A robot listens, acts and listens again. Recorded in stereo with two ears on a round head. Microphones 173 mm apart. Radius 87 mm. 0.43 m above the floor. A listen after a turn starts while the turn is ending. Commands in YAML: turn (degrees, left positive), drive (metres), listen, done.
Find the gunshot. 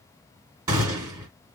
turn: -20
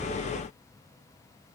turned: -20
listen: true
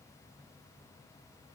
done: "I heard a gunshot, but can't make it out now. It was about straight ahead or 140° right."